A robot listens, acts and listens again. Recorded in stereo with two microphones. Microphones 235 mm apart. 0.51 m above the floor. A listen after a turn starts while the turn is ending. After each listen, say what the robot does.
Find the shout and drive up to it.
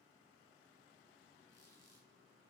Keep listening.
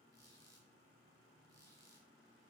Keep listening.
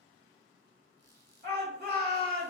Turn 40° right.
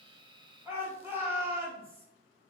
Turn 10° right.
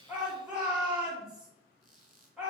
Drive 1.0 m forward.
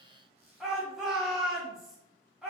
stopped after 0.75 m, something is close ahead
I am next to the shout.